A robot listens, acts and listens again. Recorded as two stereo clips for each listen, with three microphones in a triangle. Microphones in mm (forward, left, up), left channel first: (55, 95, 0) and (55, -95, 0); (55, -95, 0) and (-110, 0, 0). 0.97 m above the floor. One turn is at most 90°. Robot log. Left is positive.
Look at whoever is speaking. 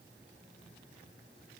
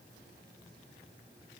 cmd idle
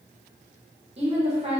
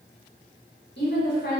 note: The woman speaking: 35° right.
cmd yaw -35
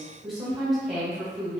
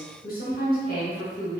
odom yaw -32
end: Found it: a woman speaking, straight ahead, 1 to 2 m away.